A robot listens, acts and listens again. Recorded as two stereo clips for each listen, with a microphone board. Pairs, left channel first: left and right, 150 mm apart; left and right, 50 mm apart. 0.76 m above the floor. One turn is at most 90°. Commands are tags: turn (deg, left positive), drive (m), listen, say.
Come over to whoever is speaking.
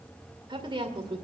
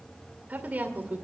<turn deg="-35"/>
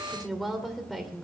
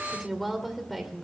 <drive m="1.0"/>
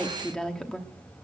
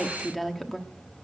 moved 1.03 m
<drive m="1.0"/>
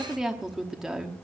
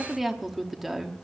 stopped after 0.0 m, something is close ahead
<say>Arrived at the woman speaking, straight ahead.</say>